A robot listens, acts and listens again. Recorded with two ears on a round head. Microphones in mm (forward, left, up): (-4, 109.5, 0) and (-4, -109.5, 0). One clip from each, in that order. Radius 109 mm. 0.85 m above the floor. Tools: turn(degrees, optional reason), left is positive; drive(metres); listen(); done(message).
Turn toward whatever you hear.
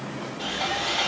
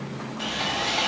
turn(degrees=-20, reason="The sawing: about 20° right or 160° right.")
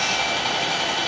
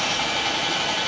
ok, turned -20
done("Facing the sawing, 1 to 2 m away.")